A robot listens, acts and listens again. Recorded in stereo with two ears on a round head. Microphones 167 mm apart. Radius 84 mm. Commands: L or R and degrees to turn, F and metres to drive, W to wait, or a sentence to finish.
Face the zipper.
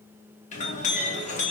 W
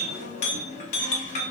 W
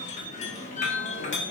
I can't make out a zipper, only a clink.